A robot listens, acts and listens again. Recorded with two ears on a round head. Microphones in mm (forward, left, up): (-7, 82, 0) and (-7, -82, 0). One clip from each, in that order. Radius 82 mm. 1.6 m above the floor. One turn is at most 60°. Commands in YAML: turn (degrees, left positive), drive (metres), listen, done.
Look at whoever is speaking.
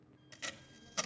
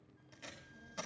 turn: -55
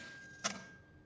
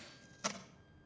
turn: -60
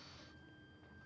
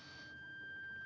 listen: true
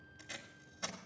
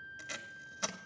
listen: true
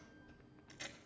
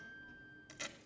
turn: -15
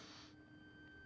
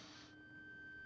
done: "Found it: a child speaking, straight ahead."